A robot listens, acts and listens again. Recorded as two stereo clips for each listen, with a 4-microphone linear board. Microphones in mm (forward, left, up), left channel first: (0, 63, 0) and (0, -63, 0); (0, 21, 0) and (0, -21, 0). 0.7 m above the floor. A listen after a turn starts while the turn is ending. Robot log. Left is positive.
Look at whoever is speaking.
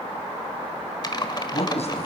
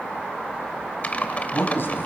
note: The man speaking: about 60° left or 120° left.
cmd yaw +60
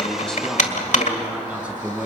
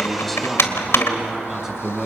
note: So it is at 10° right.
cmd yaw -10
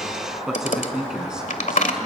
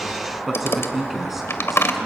end: Found it: a man speaking, straight ahead.